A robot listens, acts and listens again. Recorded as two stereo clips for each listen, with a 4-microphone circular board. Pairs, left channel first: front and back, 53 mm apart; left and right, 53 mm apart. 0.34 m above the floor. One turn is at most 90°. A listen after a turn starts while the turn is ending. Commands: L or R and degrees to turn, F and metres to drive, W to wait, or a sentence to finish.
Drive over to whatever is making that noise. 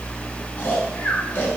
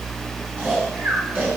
R40
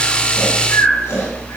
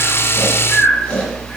L25
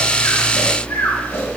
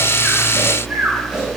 R20
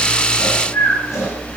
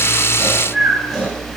F1.0
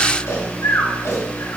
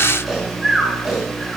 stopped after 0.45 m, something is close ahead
Something is in my way. I am facing the snoring but have not reached it.